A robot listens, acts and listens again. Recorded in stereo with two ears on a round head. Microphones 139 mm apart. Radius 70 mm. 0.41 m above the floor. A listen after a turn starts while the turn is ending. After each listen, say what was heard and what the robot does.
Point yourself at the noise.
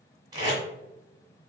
The tape being pulled: about 30° right or 150° right. Turn 30° right.
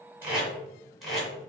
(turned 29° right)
Facing the tape being pulled, 2 to 4 m away.